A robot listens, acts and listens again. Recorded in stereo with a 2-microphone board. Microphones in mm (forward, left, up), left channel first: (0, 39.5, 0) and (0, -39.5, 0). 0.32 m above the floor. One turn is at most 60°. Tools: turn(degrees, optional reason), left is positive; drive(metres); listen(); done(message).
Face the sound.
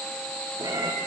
turn(degrees=-60, reason="The cat meowing: about 65° right or 115° right.")
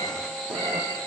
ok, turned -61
turn(degrees=-50, reason="So it is at 50° right.")
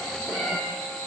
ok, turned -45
done("Facing the cat meowing, 2 to 4 m away.")